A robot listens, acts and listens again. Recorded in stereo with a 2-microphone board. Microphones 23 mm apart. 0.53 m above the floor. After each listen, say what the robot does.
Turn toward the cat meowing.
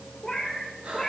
Turn 30° left.
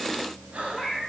Turn 20° right.
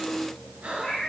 Facing the cat meowing.